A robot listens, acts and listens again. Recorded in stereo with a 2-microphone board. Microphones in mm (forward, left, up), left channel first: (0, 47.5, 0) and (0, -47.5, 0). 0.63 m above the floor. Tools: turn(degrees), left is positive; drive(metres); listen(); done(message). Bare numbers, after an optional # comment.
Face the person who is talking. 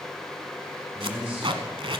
turn(-30)
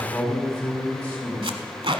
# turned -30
# So it is at 15° left.
turn(15)
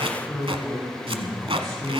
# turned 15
done("Facing the man speaking.")